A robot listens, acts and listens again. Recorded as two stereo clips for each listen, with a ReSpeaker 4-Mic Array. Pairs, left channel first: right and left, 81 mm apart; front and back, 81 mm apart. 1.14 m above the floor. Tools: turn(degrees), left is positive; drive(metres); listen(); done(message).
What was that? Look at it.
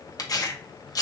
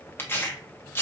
turn(degrees=-60)
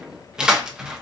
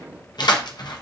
turn(degrees=10)
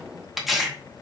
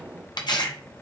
done("Facing the tearing paper.")